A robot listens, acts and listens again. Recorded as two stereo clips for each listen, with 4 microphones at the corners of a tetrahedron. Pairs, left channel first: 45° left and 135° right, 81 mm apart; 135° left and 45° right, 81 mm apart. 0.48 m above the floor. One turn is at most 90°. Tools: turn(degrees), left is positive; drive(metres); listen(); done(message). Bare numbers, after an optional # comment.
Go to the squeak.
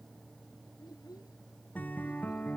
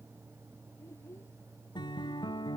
listen()
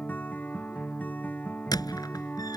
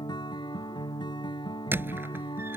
# The squeak: 15° left.
turn(15)
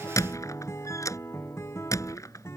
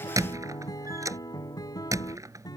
drive(1.0)
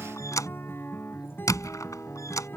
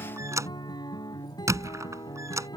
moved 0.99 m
drive(1.0)
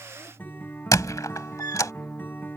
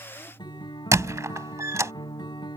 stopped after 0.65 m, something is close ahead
done("I am next to the squeak.")